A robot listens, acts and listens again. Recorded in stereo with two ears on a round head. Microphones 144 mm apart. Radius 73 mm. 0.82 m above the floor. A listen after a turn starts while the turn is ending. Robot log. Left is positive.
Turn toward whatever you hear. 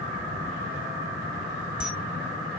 cmd yaw -30
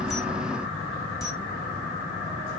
note: So it is at 25° left.
cmd yaw +25
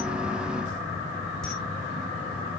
end: Facing the camera shutter.